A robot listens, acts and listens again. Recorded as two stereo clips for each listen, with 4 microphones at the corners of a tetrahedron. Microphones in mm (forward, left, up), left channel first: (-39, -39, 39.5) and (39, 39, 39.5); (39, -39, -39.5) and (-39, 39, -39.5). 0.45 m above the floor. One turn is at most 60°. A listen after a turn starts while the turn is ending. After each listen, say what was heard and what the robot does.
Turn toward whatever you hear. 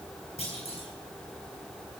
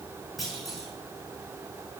The clunk: 135° right. Turn 60° right.
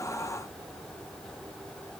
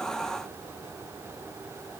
Nothing new. It was at 75° right. Turn 60° right.
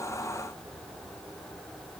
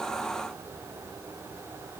Nothing new. It was at 15° right. Turn 15° right.
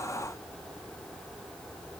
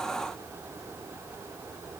Facing where the clunk came from. I can't hear it now.